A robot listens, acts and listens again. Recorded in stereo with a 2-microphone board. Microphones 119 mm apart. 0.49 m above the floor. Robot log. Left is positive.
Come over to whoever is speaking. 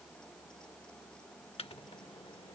cmd idle
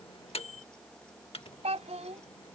note: The child speaking: about 75° right or 105° right.
cmd yaw -75
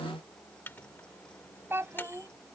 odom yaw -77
note: So it is at 20° right.
cmd yaw -20
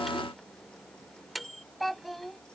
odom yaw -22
cmd fwd 1.0
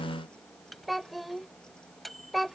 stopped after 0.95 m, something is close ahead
end: Arrived at the child speaking, straight ahead.